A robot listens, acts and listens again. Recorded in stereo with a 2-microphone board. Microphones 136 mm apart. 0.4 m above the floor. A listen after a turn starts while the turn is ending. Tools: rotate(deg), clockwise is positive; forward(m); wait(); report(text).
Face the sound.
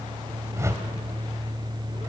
rotate(20)
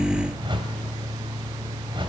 rotate(135)
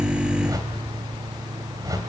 rotate(30)
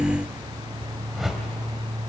report("Found it: a whoosh, straight ahead, 2 to 4 m away.")